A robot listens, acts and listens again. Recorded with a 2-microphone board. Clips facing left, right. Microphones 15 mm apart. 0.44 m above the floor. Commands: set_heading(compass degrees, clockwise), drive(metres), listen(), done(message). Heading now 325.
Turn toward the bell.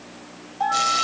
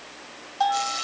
set_heading(5)
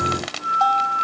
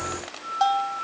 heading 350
set_heading(0)
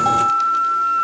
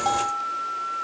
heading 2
listen()
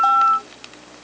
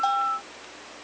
listen()
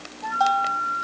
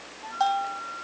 done("Found it: a bell, straight ahead.")